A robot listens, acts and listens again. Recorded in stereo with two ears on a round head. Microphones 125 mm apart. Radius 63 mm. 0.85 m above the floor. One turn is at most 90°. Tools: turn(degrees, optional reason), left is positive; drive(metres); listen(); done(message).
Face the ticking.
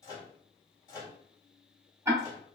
turn(degrees=-20, reason="The ticking: about 20° right or 160° right.")
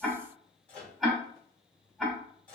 done("Facing the ticking, under 1 m away.")